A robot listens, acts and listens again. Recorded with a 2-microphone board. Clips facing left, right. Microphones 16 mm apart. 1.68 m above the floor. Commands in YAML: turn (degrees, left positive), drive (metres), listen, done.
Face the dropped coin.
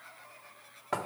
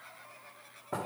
listen: true
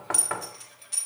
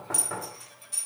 turn: 30
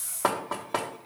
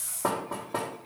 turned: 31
listen: true
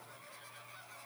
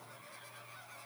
done: "I heard a dropped coin, but can't make it out now. It was about 5° right or 120° left."